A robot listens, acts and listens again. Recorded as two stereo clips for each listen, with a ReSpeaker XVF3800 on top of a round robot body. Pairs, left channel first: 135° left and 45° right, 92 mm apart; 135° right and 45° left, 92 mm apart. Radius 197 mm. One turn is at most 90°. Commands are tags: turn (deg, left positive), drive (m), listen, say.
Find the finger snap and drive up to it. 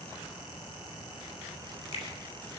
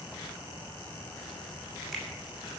<turn deg="90"/>
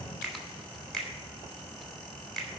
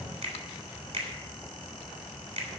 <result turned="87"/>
<turn deg="45"/>
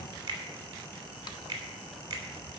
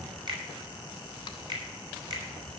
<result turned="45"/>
<drive m="1.0"/>
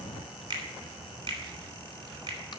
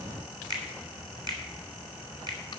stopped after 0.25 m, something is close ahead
<say>Something is in my way. I am facing the finger snap but have not reached it.</say>